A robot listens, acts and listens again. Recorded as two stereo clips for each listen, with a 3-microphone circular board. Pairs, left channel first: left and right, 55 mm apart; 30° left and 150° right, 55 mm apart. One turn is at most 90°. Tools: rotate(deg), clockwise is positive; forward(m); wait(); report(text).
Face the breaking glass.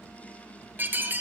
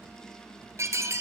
rotate(90)
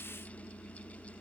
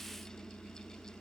rotate(50)
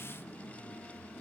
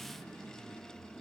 report("Facing where the breaking glass came from. I can't hear it now.")